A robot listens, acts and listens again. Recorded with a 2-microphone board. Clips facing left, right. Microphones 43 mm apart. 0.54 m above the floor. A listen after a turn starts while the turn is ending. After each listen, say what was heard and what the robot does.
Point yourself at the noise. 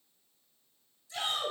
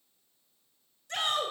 The shout: about 65° right or 115° right. Turn 65° right.
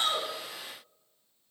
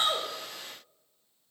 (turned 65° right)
Keep listening.
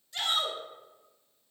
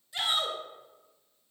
So it is at 10° right. Turn 10° right.
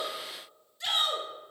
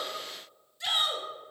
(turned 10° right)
Facing the shout, 2 to 4 m away.